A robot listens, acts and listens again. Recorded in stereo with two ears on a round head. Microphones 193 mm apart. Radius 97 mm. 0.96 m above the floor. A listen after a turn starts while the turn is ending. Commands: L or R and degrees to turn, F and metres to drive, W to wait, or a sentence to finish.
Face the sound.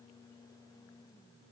W
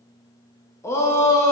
L30
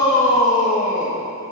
L140
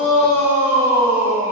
R15
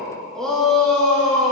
Facing the shout, 1 to 2 m away.